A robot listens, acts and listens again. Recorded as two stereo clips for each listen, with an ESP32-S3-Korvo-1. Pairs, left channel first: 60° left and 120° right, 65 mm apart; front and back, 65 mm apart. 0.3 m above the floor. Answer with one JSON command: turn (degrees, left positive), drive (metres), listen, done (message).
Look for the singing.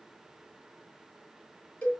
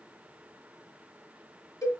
{"listen": true}
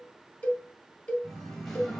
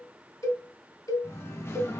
{"turn": -15}
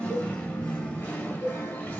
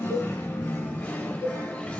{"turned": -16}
{"turn": 45}
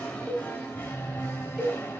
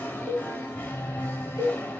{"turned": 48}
{"turn": 35}
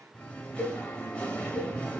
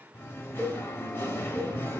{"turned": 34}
{"done": "Facing the singing, 1 to 2 m away."}